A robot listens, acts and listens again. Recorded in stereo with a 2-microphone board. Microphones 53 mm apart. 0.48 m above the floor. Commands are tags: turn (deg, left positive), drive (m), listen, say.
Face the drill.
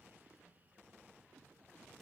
<listen/>
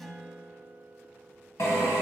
<turn deg="75"/>
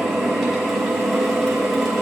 <say>Found it: a drill, straight ahead.</say>